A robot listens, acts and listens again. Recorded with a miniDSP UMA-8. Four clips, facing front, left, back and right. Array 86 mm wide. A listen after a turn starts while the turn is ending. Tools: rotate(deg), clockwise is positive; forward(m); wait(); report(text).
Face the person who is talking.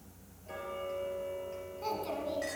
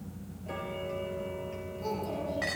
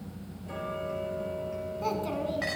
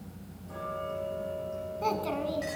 rotate(105)
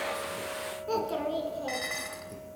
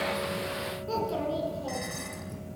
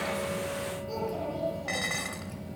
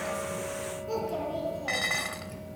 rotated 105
rotate(-15)
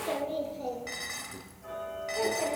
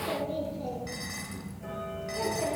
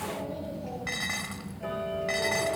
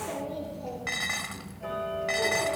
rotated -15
rotate(-10)
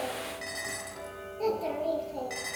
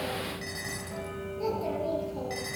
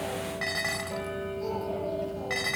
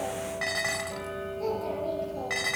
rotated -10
report("Facing the child speaking.")